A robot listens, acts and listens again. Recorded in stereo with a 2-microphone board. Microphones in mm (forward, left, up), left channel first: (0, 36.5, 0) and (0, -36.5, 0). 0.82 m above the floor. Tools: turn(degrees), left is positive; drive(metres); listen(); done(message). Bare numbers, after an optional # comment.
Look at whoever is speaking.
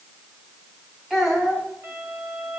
turn(-30)
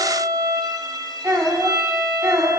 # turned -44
# So it is at 130° right.
turn(-130)
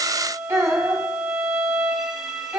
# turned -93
# The child speaking is now 40° right.
turn(-40)
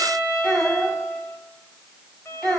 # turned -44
done("Facing the child speaking, 2 to 4 m away.")